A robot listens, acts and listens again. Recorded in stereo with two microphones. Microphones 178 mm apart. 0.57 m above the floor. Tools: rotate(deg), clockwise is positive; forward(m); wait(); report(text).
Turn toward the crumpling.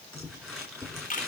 rotate(-30)
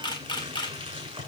rotate(25)
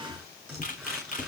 report("Facing the crumpling, over 4 m away.")